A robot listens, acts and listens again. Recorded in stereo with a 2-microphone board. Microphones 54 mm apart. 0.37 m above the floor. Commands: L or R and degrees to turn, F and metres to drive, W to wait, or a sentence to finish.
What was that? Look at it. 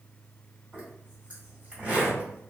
R20
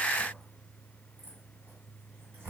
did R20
R140
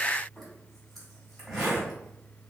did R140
Found it: a zipper, straight ahead, 1 to 2 m away.